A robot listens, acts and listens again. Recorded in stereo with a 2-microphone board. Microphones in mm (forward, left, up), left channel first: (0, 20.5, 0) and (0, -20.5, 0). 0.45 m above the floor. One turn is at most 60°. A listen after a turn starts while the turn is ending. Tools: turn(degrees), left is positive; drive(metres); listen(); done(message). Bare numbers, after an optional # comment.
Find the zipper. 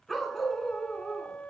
listen()
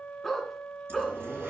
# The zipper: about 65° right or 115° right.
turn(-60)
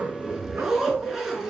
# So it is at 10° right.
turn(-10)
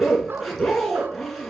done("Found it: a zipper, straight ahead.")